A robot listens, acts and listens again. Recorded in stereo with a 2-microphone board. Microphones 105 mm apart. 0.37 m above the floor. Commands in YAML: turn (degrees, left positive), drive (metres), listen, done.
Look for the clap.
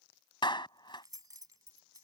turn: 50
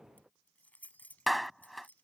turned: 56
done: "Facing the clap."